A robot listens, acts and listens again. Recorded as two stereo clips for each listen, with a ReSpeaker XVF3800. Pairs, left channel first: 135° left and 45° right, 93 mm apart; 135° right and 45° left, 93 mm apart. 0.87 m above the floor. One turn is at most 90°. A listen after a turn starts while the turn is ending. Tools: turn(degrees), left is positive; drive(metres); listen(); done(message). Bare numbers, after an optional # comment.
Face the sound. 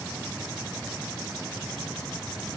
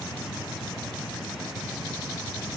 listen()
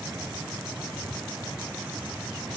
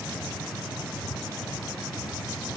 listen()
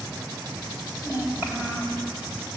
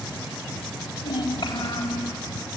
# The child speaking: 115° right.
turn(-90)
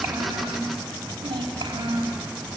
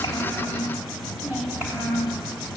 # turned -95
# The child speaking is now 25° right.
turn(-25)
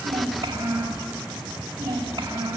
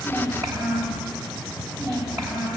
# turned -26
done("Found it: a child speaking, straight ahead.")